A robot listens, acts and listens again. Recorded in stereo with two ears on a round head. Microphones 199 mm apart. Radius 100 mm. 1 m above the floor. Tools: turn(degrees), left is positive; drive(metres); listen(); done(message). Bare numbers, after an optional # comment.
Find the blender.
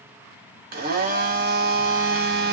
# The blender: about 45° right or 135° right.
turn(-45)
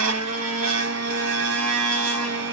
# So it is at 90° right.
turn(-90)
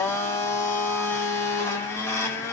# The blender is now 10° left.
turn(10)
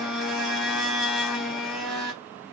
done("Found it: a blender, straight ahead, 1 to 2 m away.")